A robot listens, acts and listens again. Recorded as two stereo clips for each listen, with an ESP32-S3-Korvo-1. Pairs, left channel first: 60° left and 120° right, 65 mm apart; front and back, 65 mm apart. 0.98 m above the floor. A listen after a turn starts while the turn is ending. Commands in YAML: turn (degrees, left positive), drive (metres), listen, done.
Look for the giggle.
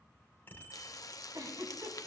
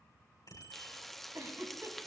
turn: -140
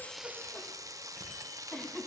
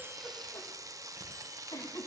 turn: -20
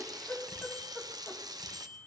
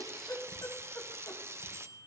done: "Found it: a giggle, straight ahead."